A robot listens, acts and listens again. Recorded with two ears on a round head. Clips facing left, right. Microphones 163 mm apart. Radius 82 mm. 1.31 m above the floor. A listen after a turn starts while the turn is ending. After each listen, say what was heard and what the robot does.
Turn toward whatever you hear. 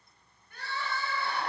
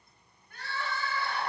Turn 90° left.
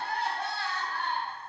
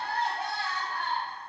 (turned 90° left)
So it is at 15° right. Turn 15° right.
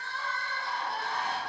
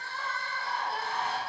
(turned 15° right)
Found it: crying, straight ahead, under 1 m away.